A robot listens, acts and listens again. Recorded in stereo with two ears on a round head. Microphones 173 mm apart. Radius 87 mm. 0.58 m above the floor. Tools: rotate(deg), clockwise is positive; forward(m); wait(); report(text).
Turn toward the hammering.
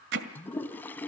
rotate(65)
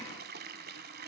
wait()
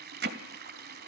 rotate(50)
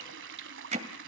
rotate(35)
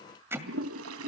rotate(10)
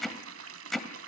report("Facing the hammering, 1 to 2 m away.")